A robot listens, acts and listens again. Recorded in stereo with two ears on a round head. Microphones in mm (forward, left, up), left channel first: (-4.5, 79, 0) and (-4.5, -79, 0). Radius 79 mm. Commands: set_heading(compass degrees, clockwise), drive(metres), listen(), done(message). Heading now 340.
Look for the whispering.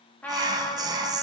set_heading(5)
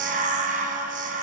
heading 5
set_heading(140)
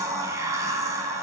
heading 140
set_heading(155)
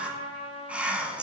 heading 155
done("Facing the whispering, under 1 m away.")